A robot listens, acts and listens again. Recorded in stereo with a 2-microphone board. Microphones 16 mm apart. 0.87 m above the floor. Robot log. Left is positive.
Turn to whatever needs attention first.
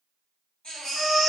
note: The baby crying: about 70° left or 110° left.
cmd yaw +70
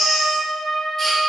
note: So it is at 30° left.
cmd yaw +30
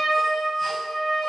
cmd idle
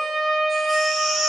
note: The baby crying is now 10° right.
cmd yaw -10
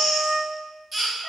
end: Facing the baby crying, 1 to 2 m away.